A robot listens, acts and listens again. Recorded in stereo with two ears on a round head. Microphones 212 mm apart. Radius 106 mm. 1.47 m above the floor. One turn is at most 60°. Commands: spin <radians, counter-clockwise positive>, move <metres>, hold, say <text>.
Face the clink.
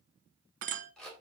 spin -0.61
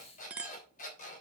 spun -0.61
say Facing the clink.